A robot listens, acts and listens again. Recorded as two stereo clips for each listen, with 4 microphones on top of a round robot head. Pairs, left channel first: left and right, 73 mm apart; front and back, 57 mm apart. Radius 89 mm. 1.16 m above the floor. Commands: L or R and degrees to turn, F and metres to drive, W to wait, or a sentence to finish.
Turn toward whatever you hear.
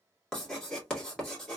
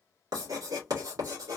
L170
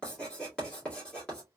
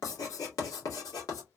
L10
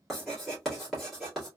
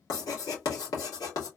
Facing the writing.